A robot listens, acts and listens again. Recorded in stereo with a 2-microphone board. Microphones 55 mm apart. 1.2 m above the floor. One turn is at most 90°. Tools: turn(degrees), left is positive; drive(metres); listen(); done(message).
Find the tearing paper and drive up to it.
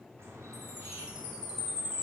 listen()
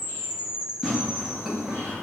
turn(degrees=-30)
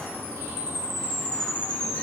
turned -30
listen()
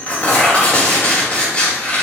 turn(degrees=20)
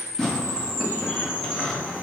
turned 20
drive(metres=1.0)
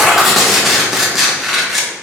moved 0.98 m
drive(metres=1.0)
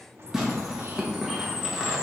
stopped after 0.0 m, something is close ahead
turn(degrees=-10)
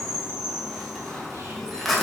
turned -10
done("Arrived at the tearing paper, straight ahead.")